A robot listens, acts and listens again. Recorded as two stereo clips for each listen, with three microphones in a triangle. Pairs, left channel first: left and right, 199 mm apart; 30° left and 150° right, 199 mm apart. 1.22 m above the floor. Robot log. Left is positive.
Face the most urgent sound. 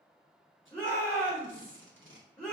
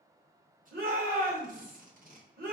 note: The shout: 175° left.
cmd yaw +175
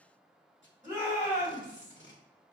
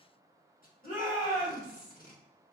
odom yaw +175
note: The shout is now 10° right.
cmd yaw -10
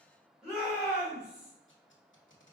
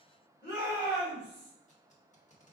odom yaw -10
end: Facing the shout.